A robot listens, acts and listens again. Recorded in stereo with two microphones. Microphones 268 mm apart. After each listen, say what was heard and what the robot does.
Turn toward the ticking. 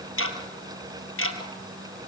The ticking: about 55° left or 125° left. Turn 55° left.
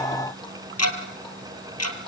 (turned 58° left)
So it is at 70° left. Turn 70° left.
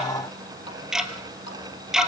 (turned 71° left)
Found it: ticking, straight ahead.